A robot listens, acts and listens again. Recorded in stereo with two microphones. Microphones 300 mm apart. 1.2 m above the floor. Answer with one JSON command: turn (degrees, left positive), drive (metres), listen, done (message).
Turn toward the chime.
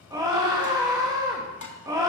{"listen": true}
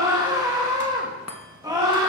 {"turn": 55}
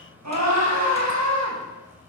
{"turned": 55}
{"listen": true}
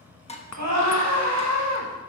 {"turn": 70}
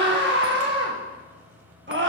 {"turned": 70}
{"listen": true}
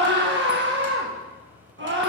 {"listen": true}
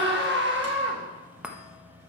{"done": "Facing the chime."}